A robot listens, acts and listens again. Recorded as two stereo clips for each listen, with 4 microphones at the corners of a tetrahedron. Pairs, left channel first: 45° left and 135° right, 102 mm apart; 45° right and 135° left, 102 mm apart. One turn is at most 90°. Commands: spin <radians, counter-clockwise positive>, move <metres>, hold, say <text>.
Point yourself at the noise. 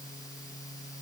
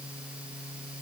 hold
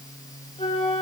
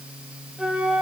spin 0.96
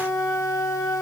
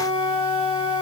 spin -0.35
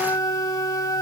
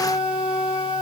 spin -0.17
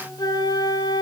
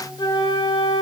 say Found it: a flute, straight ahead.